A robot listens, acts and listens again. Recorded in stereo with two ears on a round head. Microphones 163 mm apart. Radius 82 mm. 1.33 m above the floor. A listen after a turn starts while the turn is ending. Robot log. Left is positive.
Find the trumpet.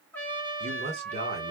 cmd yaw +30
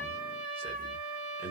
note: So it is at 140° left.
cmd yaw +140
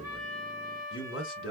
note: The trumpet is now 20° left.
cmd yaw +20
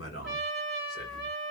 end: Found it: a trumpet, straight ahead.